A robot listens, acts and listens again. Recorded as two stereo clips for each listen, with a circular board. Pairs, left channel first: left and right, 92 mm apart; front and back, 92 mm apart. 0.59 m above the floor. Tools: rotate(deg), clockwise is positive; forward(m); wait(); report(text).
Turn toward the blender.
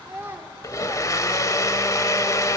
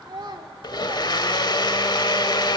rotate(-35)
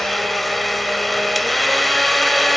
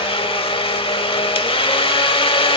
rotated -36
report("Facing the blender, 1 to 2 m away.")